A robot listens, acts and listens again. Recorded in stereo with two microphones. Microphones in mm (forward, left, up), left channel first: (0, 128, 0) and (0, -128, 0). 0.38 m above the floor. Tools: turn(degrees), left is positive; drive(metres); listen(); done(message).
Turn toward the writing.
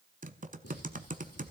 turn(degrees=65)
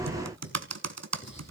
listen()
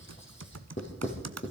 turn(degrees=45)
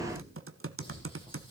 listen()
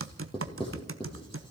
turn(degrees=20)
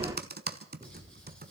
done("Found it: writing, straight ahead, over 4 m away.")